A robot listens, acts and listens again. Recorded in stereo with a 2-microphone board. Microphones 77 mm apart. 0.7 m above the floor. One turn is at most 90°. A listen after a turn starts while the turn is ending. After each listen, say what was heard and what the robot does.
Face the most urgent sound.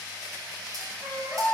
Turn 30° right.
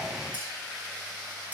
Keep listening.
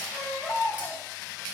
So it is at 20° left. Turn 20° left.
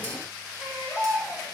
Facing the baby crying, 2 to 4 m away.